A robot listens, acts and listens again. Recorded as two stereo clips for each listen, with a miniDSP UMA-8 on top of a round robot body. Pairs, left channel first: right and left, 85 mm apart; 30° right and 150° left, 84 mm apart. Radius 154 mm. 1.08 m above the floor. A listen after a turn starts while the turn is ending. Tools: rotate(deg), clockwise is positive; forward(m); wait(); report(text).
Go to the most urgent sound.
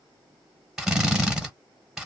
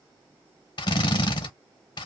wait()
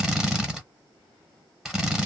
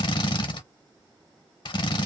wait()
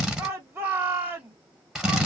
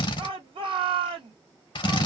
rotate(-155)
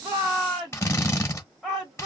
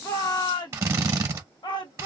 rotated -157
forward(1.0)
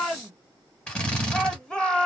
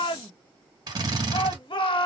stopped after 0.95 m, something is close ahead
rotate(10)
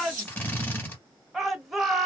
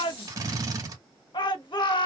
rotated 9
report("Arrived at the shout, straight ahead.")